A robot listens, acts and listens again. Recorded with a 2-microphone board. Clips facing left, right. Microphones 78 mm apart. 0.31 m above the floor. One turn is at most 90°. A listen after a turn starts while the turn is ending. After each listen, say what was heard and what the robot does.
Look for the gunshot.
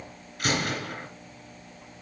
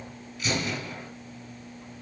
The gunshot: about 55° left or 125° left. Turn 55° left.
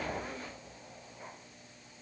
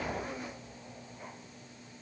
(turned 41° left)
Keep listening.
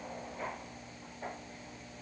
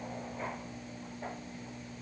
I heard a gunshot, but can't make it out now. It was about 15° left or 85° left.